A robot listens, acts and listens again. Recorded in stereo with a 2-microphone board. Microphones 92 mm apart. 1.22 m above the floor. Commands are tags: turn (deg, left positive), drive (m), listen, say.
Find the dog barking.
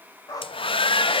<turn deg="40"/>
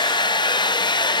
<listen/>
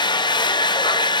<listen/>
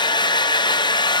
<say>I heard a dog barking, but can't make it out now. It was about straight ahead or 100° left.</say>